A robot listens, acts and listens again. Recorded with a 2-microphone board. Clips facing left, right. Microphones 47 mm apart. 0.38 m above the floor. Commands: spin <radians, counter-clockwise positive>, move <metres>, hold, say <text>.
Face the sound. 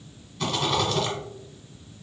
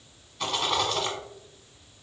spin -0.52
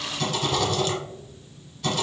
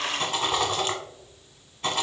spin -2.62
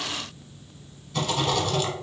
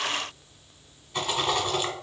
spin -0.44
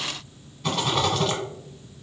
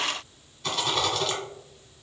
say Facing the rattle, 1 to 2 m away.